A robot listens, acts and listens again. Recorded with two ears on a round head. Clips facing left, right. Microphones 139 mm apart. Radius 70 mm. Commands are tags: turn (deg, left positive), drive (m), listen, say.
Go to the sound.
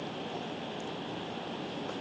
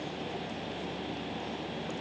<listen/>
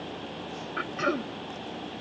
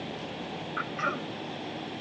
<turn deg="40"/>
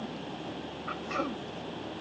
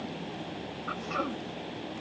<drive m="1.0"/>
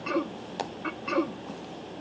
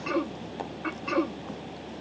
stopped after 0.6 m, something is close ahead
<say>Blocked. The throat clearing is further on, straight ahead.</say>